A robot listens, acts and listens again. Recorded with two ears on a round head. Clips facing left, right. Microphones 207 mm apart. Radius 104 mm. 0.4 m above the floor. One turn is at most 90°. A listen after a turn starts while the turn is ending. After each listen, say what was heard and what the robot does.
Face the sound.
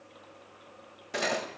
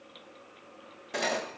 Turn 30° left.
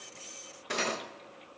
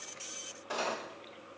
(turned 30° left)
So it is at 145° left. Turn 90° left.
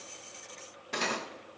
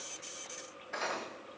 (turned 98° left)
The cutlery clinking is now 50° left. Turn 50° left.
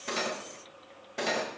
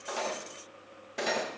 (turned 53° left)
Found it: cutlery clinking, straight ahead.